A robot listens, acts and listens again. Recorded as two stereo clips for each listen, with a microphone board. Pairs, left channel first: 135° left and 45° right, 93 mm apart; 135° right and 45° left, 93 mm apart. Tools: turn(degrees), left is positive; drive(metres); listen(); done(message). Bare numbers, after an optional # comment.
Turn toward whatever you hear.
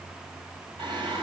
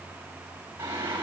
# The singing: 20° right.
turn(-20)
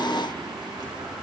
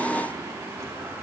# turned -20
listen()
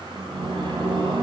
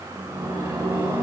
# The singing is now 20° right.
turn(-20)
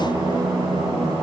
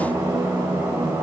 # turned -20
# The singing is now 10° right.
turn(-10)
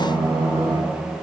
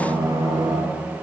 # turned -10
done("Facing the singing, over 4 m away.")